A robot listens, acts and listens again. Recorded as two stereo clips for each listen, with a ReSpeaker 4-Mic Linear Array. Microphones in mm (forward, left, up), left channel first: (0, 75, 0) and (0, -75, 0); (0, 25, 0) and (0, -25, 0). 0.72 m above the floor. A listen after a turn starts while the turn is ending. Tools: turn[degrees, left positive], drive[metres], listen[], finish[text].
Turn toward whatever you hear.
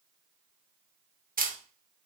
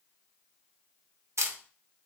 Thought: The camera shutter: about 70° right or 110° right.
Action: turn[-70]
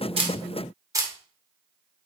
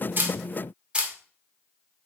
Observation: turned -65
Thought: So it is at 25° right.
Action: turn[-25]
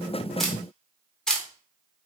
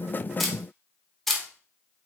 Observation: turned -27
Action: finish[Facing the camera shutter.]